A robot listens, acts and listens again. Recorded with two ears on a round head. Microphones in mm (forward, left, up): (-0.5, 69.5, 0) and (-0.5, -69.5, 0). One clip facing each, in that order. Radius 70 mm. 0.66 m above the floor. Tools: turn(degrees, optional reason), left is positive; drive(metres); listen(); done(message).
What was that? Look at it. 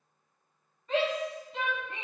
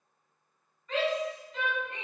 turn(degrees=25, reason="The shout: about 25° left or 155° left.")
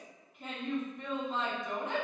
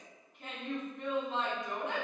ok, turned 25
done("Found it: a shout, straight ahead, 1 to 2 m away.")